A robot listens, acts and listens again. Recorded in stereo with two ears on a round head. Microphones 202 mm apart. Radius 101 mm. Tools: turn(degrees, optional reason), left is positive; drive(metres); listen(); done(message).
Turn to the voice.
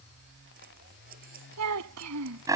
turn(degrees=-90)
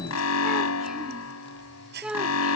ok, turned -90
done("Found it: a child speaking, straight ahead.")